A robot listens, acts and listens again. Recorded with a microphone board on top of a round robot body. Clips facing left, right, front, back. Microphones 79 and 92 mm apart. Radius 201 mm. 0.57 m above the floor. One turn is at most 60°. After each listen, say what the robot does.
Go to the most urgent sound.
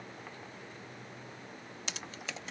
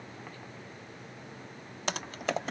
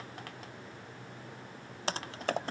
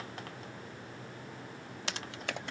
Keep listening.
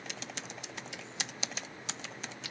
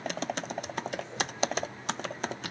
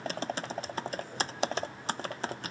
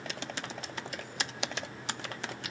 Keep listening.
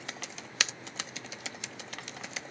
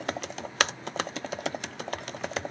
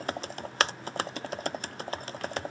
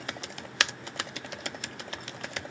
I can't make out anything urgent, only typing on a keyboard.